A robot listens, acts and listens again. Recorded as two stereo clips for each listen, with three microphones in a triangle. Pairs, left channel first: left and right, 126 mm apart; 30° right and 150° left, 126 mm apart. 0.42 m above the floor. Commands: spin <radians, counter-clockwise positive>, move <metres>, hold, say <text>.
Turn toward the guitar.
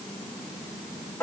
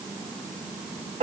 hold
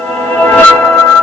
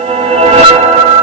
hold
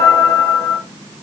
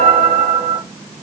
say I can't make out a guitar to turn to.